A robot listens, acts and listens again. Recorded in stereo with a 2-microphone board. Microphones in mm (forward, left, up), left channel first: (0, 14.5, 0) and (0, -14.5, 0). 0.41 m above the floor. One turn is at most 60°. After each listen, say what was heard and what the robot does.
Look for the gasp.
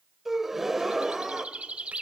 Turn 30° right.
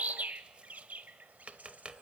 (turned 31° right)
Keep listening.
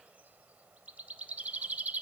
I heard a gasp, but can't make it out now. It was about 20° left or 135° right.